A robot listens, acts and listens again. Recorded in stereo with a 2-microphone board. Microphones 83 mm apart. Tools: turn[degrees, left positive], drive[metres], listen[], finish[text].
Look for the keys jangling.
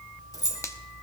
Thought: The keys jangling: about 45° left or 135° left.
Action: turn[45]
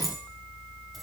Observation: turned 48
Action: finish[Found it: keys jangling, straight ahead.]